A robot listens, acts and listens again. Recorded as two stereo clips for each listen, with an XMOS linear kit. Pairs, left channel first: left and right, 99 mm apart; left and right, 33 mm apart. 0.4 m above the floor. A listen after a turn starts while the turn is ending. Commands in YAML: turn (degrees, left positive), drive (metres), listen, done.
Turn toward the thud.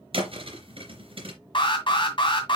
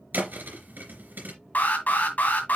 turn: -70
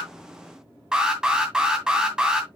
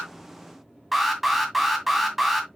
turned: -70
listen: true
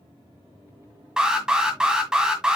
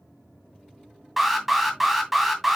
done: "I heard a thud, but can't make it out now. It was about straight ahead or 40° right."